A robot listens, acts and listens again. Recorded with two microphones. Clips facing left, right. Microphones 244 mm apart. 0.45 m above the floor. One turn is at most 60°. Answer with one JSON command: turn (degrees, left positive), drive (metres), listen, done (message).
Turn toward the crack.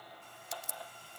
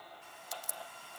{"turn": 25}
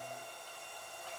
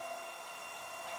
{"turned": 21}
{"listen": true}
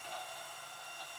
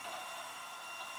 {"done": "I heard a crack, but can't make it out now. It was about 5° left or 135° left."}